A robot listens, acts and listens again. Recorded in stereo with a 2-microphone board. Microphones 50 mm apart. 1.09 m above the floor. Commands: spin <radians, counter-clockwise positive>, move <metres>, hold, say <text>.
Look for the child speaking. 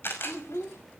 spin 1.13
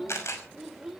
spin -0.17
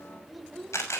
say Facing the child speaking.